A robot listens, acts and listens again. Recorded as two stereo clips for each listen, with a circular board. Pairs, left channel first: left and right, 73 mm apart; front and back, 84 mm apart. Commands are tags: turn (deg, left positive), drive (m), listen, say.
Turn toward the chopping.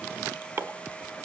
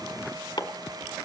<turn deg="-35"/>
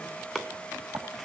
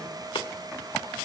<listen/>
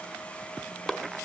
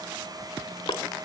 <say>Found it: chopping, straight ahead.</say>